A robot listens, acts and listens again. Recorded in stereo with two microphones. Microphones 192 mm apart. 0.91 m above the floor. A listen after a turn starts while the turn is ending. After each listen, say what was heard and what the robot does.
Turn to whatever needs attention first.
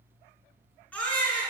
Turn 30° left.
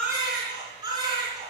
So it is at 20° right. Turn 20° right.
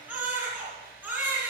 Facing the baby crying, over 4 m away.